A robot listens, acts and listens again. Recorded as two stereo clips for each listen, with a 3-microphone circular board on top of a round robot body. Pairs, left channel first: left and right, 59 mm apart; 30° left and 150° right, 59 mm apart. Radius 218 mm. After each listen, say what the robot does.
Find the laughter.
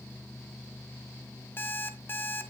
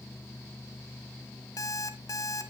Keep listening.
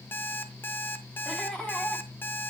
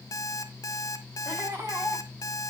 Turn 160° left.
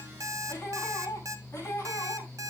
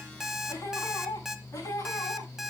Turn 45° left.
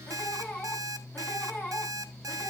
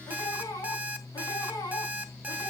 Turn 25° left.
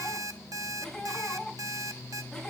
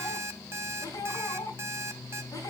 Found it: laughter, straight ahead, over 4 m away.